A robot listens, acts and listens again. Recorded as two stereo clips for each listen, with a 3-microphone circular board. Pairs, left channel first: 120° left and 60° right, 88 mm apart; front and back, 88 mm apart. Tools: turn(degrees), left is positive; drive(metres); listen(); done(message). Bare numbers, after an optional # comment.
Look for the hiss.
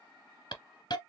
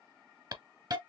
# The hiss: 145° left.
turn(145)
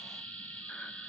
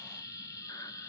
# The hiss is now 45° left.
turn(45)
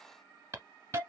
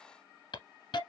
done("Found it: a hiss, straight ahead, 1 to 2 m away.")